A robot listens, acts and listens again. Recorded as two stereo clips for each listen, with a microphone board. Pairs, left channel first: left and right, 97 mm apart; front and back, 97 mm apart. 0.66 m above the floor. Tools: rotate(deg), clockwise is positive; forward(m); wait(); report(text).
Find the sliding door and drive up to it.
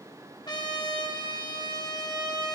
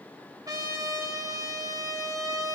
wait()
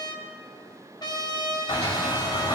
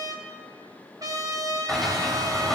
rotate(-85)
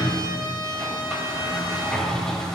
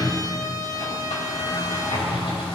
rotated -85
forward(1.0)
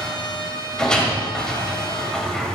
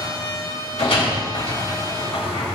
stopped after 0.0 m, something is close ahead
rotate(-10)
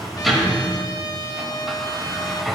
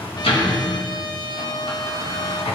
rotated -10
report("Something is in my way. I am facing the sliding door but have not reached it.")